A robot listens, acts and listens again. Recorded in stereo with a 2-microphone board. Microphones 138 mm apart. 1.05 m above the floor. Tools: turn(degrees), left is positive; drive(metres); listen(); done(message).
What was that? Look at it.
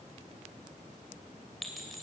turn(degrees=30)
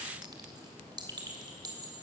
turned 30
turn(degrees=-30)
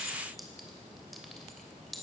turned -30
done("Facing the clink.")